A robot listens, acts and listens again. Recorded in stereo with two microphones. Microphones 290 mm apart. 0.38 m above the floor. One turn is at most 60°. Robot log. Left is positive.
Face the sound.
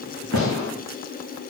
note: The gunshot: about 65° left or 115° left.
cmd yaw +60
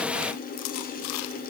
cmd idle
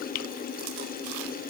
end: I heard a gunshot, but can't make it out now. It was about 5° left or 55° left.